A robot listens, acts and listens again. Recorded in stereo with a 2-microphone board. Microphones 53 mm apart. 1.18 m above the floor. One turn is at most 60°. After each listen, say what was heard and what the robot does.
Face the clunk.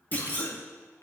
The clunk: about 35° left or 145° left. Turn 35° left.
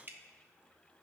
Keep listening.
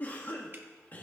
I heard a clunk, but can't make it out now. It was about straight ahead or 110° left.